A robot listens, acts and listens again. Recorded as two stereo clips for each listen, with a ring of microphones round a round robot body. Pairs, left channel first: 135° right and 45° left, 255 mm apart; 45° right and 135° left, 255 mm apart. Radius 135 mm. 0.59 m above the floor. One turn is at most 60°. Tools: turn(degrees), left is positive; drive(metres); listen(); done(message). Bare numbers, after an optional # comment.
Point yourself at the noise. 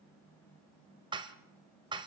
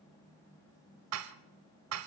# The dishes clattering: 115° left.
turn(60)
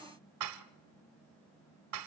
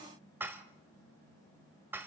# The dishes clattering is now 55° left.
turn(55)
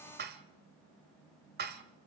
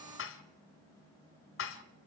done("Found it: dishes clattering, straight ahead.")